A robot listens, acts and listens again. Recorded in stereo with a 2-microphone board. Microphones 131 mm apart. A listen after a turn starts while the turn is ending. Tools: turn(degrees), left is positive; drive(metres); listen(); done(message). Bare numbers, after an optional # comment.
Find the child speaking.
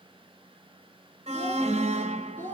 turn(30)
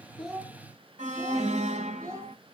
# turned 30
# So it is at 25° right.
turn(-25)
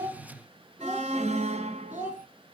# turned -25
# The child speaking is now 15° right.
turn(-15)
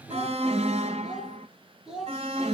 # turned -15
done("Facing the child speaking.")